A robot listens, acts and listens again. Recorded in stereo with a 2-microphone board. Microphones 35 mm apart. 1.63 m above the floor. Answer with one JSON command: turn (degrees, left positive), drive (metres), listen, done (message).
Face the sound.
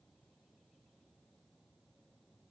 {"listen": true}
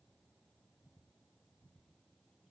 {"listen": true}
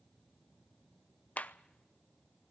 {"turn": 45}
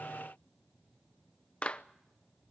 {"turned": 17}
{"turn": 30}
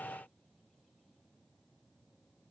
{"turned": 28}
{"listen": true}
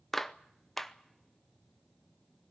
{"done": "Found it: a clap, straight ahead, under 1 m away."}